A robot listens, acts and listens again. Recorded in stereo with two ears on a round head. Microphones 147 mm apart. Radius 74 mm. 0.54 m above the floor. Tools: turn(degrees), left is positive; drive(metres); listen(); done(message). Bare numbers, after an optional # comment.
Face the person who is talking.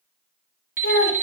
# The child speaking: about 65° left or 115° left.
turn(65)
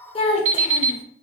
# So it is at 35° left.
turn(35)
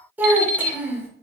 # The child speaking is now 15° right.
turn(-15)
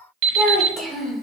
done("Facing the child speaking, under 1 m away.")